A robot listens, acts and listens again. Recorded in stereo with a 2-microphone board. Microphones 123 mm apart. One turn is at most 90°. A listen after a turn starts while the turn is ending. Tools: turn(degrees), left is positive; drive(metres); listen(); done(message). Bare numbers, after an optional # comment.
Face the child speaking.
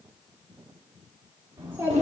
# The child speaking: about 20° right or 160° right.
turn(-20)
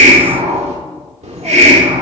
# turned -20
listen()
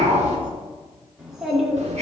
turn(30)
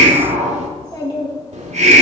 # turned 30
# So it is at 140° left.
turn(90)
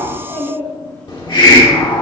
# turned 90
# The child speaking is now 15° left.
turn(15)
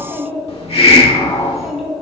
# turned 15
done("Facing the child speaking.")